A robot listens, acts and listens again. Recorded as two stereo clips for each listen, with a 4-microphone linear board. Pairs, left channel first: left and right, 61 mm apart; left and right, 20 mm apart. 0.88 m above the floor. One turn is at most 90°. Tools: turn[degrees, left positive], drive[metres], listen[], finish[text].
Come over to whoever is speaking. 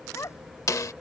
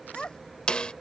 Thought: The child speaking: about 55° left or 125° left.
Action: turn[55]
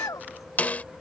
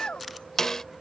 Thought: So it is at 70° left.
Action: turn[70]
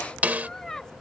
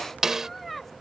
Thought: The child speaking is now 10° left.
Action: turn[10]
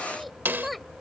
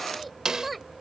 Action: drive[1.0]
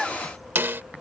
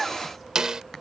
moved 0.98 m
Action: listen[]
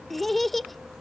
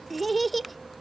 Action: drive[1.0]
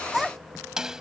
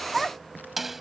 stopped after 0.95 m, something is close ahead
Action: finish[I am next to the child speaking.]